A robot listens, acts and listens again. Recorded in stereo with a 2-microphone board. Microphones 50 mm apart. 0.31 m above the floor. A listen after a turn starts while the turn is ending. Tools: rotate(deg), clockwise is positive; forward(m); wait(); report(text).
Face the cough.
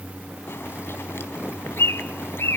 wait()
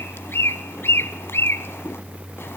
wait()
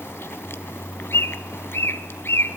report("I can't make out a cough, only a bird.")